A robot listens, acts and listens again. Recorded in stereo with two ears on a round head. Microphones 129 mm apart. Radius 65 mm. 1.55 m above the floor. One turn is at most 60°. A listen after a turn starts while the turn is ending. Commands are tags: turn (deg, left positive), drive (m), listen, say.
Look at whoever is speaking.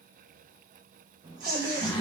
<turn deg="-25"/>
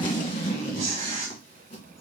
<say>Facing the child speaking.</say>